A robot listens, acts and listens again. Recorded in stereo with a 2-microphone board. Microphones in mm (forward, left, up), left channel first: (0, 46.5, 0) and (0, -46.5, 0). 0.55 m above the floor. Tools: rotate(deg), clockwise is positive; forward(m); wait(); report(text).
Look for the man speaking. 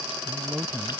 rotate(30)
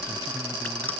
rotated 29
wait()
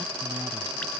rotate(150)
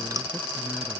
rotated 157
report("Found it: a man speaking, straight ahead.")